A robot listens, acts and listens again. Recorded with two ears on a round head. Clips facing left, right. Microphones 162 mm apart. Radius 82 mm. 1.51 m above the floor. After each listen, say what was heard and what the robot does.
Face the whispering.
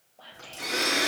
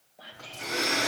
Turn 30° right.
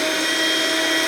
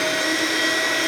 Keep listening.
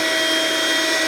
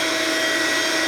Keep listening.
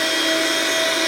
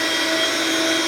I heard whispering, but can't make it out now. It was about 20° left or 140° right.